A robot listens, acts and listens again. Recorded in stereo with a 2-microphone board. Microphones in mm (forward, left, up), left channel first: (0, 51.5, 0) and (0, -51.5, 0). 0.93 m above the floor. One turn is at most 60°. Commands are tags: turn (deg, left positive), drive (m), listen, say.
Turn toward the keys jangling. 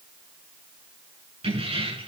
<turn deg="-60"/>
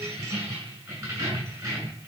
<turn deg="-30"/>
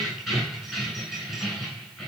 <say>Found it: keys jangling, straight ahead.</say>